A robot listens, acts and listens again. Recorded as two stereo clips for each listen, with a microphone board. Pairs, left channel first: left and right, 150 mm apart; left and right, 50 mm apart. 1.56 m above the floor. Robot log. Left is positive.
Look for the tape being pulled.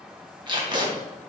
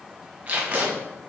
note: The tape being pulled: about 30° right or 150° right.
cmd yaw -30
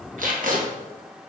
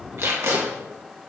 note: So it is at 115° right.
cmd yaw -115
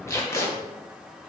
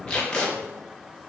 note: The tape being pulled is now 20° left.
cmd yaw +20
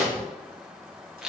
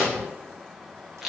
end: Facing the tape being pulled, 1 to 2 m away.